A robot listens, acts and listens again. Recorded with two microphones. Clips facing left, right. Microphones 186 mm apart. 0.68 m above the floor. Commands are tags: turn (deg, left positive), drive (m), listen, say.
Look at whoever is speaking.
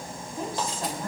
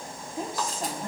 <turn deg="-25"/>
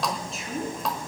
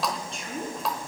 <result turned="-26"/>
<say>Facing the woman speaking.</say>